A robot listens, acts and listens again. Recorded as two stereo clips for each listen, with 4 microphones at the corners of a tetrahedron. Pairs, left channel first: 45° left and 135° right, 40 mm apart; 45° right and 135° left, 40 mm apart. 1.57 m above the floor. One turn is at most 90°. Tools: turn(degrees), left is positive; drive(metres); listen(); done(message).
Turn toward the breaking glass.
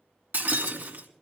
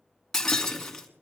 turn(degrees=-90)
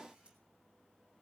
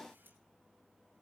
turn(degrees=-35)
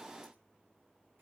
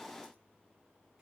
done("I heard breaking glass from this way, but can't make it out now.")